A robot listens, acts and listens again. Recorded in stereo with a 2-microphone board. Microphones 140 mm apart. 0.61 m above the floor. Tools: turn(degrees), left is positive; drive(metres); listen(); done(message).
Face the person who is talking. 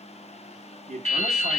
turn(degrees=-55)
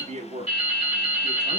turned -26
turn(degrees=-80)
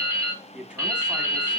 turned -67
turn(degrees=-10)
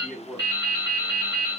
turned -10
done("Facing the man speaking.")